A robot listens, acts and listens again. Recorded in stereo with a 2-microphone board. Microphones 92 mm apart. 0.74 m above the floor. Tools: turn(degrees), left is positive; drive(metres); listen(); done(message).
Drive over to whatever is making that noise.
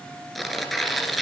turn(degrees=30)
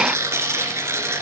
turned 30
turn(degrees=-30)
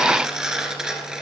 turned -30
drive(metres=1.0)
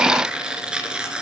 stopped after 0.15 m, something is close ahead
turn(degrees=-10)
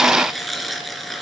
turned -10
done("Something is in my way. I am facing the tearing paper but have not reached it.")